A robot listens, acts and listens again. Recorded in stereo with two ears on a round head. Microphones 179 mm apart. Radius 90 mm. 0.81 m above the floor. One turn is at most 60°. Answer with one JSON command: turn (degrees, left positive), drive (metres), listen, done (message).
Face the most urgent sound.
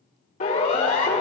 {"turn": 40}
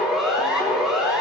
{"done": "Facing the siren."}